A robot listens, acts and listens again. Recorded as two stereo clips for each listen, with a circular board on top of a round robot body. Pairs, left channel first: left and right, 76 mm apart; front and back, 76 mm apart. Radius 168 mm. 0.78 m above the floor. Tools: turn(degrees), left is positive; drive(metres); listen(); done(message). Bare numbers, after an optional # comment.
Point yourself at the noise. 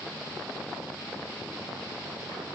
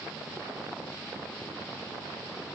listen()
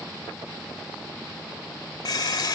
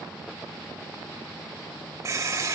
# The running tap: 125° left.
turn(125)
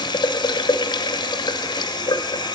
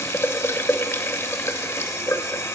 # The running tap is now 60° left.
turn(60)
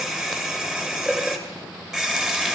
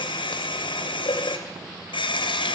done("Facing the running tap, under 1 m away.")